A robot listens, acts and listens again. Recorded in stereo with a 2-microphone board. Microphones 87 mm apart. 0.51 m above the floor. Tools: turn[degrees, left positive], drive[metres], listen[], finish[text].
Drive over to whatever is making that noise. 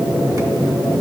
Action: listen[]
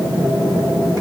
Action: listen[]
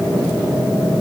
Action: finish[I can't make out anything.]